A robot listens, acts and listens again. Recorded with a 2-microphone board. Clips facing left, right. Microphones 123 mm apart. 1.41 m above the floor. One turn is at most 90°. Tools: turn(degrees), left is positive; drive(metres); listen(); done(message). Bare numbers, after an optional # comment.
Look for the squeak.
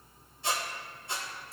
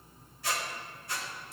# The squeak: about 25° left or 155° left.
turn(25)
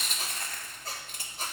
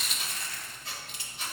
# So it is at 125° left.
turn(90)
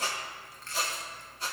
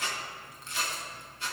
# The squeak is now 45° left.
turn(45)
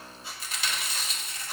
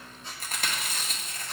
done("Found it: a squeak, straight ahead.")